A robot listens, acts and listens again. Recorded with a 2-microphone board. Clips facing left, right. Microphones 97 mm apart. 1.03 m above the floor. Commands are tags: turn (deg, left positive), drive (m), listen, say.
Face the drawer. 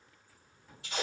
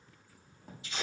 <turn deg="-90"/>
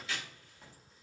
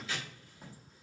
<turn deg="-10"/>
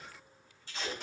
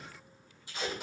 <listen/>
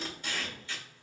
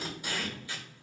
<listen/>
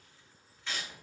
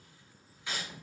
<say>Facing the drawer.</say>